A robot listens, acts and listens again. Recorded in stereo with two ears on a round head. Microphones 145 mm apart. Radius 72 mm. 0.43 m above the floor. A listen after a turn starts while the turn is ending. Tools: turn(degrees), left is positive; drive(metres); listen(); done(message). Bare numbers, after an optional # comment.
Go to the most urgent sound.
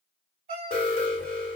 # The alarm: about 40° left or 140° left.
turn(40)
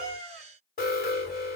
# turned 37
# So it is at 95° left.
turn(95)
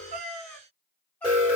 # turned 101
# The alarm is now 10° right.
turn(-10)
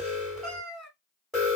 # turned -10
drive(1.0)
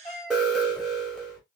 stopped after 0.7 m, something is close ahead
done("Arrived at the alarm, straight ahead.")